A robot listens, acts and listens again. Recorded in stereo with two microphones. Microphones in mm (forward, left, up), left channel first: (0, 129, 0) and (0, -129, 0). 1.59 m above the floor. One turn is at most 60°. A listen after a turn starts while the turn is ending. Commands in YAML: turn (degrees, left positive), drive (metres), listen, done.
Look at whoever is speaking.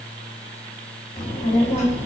turn: 35
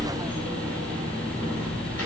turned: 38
turn: 60
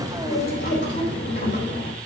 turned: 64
turn: 40
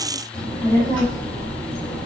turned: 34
done: "Facing the child speaking, 2 to 4 m away."